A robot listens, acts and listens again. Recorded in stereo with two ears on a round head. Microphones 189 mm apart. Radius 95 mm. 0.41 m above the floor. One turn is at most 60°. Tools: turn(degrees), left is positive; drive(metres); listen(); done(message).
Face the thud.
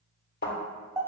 turn(degrees=50)
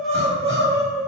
listen()
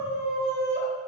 done("I heard a thud, but can't make it out now. It was about straight ahead or 80° left.")